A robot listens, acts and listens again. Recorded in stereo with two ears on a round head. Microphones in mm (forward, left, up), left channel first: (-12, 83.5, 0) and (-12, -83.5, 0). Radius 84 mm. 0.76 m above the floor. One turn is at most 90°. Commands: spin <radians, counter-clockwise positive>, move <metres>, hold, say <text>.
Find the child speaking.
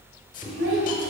spin -1.57
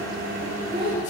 spin -0.61
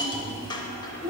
spin -0.52
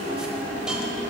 hold
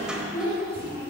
spin -0.17
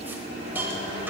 hold
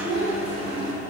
spin -0.17
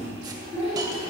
say Found it: a child speaking, straight ahead, over 4 m away.